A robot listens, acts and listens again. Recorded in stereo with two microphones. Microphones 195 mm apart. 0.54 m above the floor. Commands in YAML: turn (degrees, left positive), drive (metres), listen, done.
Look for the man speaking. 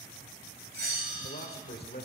turn: 55
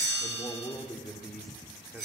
turn: -10
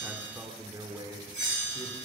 turn: -25
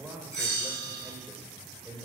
turn: -10
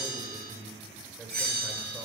done: "Found it: a man speaking, straight ahead."